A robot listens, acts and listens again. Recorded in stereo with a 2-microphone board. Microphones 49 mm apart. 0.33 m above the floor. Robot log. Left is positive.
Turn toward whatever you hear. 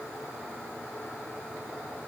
cmd idle
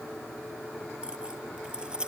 note: The keys jangling: about 20° right or 160° right.
cmd yaw -20
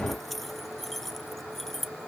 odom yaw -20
end: Found it: keys jangling, straight ahead.